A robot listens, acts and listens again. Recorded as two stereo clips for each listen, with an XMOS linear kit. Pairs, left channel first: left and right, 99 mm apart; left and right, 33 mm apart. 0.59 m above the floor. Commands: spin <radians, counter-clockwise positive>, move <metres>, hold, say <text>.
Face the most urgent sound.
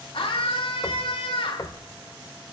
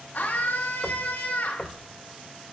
spin 1.31
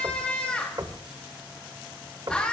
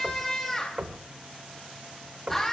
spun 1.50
spin 0.17
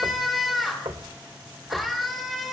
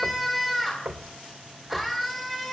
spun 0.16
say Facing the scream.